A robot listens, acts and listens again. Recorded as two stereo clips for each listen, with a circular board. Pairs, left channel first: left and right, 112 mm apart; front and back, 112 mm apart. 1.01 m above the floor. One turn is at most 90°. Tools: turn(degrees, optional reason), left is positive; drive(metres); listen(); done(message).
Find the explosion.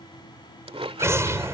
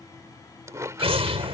turn(degrees=-90, reason="The explosion: 155° right.")
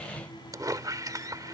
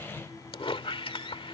turn(degrees=-65, reason="Nothing new. It was at 65° right.")
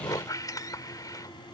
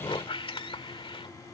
done("I heard an explosion from this way, but can't make it out now.")